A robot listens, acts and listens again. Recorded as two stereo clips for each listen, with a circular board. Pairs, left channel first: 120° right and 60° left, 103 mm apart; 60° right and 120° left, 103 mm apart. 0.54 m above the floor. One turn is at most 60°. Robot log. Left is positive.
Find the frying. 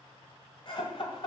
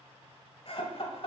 cmd idle
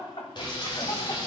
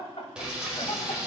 note: The frying: 160° right.
cmd yaw -60
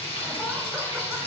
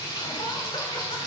note: The frying is now 105° right.
cmd yaw -60
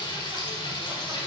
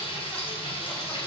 note: The frying is now 80° right.
cmd yaw -60
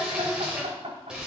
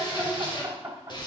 note: The frying is now 20° right.
cmd yaw -20
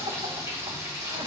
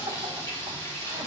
end: Facing the frying.